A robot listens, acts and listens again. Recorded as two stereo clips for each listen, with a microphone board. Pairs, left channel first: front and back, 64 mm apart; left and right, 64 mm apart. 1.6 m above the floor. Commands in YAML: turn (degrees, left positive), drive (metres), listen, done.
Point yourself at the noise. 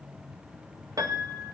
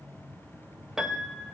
turn: -175
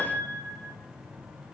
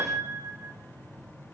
turn: -55
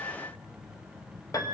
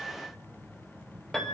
done: "Found it: a piano, straight ahead, 1 to 2 m away."